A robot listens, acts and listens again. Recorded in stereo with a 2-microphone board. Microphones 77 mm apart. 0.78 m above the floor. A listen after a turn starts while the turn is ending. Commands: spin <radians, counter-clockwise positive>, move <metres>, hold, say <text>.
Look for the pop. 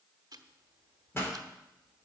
spin 0.52
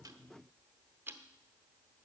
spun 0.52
hold
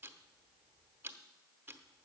say I heard a pop, but can't make it out now. It was about straight ahead or 120° left.